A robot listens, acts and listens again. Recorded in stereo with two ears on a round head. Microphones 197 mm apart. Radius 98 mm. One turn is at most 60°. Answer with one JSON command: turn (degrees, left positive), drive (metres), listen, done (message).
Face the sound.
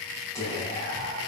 {"turn": 30}
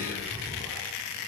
{"turn": 60}
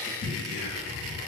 {"turn": 50}
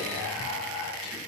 {"done": "Facing the whispering, 1 to 2 m away."}